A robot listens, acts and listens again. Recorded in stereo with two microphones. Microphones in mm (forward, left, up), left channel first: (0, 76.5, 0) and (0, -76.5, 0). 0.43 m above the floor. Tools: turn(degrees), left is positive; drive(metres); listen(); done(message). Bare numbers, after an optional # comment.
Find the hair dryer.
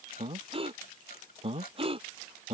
listen()
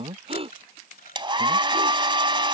# The hair dryer: about 30° right or 150° right.
turn(-30)
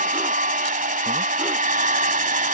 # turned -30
# So it is at 115° right.
turn(-115)
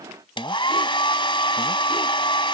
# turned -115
# The hair dryer is now 35° left.
turn(35)
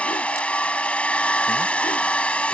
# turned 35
# The hair dryer is now 10° left.
turn(10)
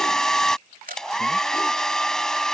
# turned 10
done("Facing the hair dryer.")